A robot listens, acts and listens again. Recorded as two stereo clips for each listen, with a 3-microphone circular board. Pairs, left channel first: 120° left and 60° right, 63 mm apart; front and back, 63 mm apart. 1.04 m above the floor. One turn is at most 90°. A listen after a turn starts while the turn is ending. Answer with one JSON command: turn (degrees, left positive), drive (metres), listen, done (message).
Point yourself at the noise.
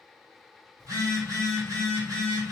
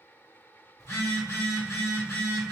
{"turn": -40}
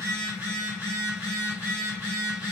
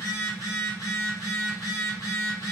{"done": "Found it: a phone buzzing, straight ahead."}